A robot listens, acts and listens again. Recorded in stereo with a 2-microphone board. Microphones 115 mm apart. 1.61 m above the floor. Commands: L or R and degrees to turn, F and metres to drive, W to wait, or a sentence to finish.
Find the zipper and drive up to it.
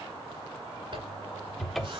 R55
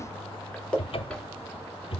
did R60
F1.0
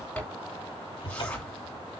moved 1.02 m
L10
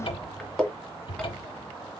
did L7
F1.0
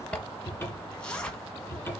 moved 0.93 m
L10
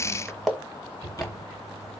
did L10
F1.0
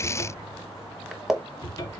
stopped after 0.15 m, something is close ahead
Arrived at the zipper, straight ahead.